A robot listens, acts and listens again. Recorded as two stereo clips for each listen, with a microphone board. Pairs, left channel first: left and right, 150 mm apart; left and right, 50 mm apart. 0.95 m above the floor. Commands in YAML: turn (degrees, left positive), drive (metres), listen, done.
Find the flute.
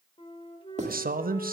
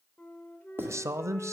turn: 35
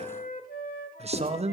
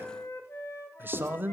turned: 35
turn: 110
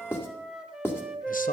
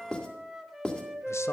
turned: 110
done: "Found it: a flute, straight ahead, 1 to 2 m away."